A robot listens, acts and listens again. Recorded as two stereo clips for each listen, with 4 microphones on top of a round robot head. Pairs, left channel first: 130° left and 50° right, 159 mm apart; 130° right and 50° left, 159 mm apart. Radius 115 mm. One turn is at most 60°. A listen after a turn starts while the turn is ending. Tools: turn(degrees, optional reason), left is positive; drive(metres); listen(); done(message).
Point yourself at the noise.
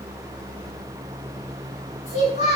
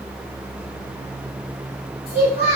turn(degrees=60, reason="The child speaking: 175° left.")
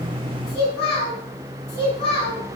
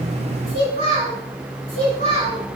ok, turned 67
turn(degrees=60, reason="The child speaking is now 105° left.")
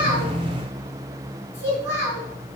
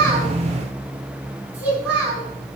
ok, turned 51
turn(degrees=55, reason="The child speaking is now 55° left.")
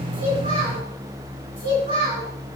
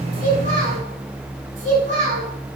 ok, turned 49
done("Found it: a child speaking, straight ahead.")